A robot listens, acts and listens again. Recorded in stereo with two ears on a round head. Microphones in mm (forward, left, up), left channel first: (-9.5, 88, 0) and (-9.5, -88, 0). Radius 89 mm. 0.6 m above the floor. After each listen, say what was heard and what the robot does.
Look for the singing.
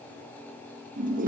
Keep listening.
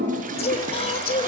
The singing: about 30° left or 150° left. Turn 30° left.
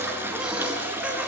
Keep listening.
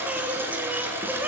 So it is at 10° right. Turn 10° right.
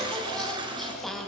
Found it: singing, straight ahead.